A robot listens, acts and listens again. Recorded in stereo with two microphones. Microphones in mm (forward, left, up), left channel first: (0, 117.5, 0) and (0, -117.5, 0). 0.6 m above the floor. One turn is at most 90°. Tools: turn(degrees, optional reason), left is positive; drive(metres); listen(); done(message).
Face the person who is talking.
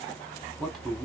turn(degrees=30)
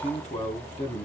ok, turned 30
turn(degrees=90, reason="So it is at 145° left.")
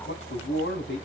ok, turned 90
turn(degrees=90, reason="The man speaking is now 105° left.")
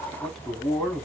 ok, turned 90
done("Facing the man speaking, 1 to 2 m away.")